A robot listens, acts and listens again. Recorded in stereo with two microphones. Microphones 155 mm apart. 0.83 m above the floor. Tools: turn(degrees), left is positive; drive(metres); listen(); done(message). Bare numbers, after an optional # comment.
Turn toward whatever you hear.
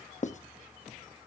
# The writing: about 50° left or 130° left.
turn(50)
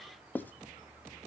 # So it is at 15° left.
turn(15)
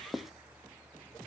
done("Found it: writing, straight ahead, under 1 m away.")